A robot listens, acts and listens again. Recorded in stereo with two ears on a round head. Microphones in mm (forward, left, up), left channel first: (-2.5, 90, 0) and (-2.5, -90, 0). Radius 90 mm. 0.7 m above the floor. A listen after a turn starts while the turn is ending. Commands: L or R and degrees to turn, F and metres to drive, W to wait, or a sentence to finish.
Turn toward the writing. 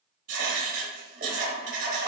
R45
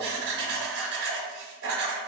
R80
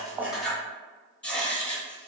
Found it: writing, straight ahead.